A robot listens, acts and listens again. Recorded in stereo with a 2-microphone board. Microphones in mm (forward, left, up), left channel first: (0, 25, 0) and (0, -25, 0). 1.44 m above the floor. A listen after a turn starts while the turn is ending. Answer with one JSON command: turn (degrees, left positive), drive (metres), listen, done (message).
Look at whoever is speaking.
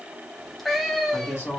{"turn": 90}
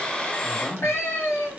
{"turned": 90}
{"done": "Facing the woman speaking."}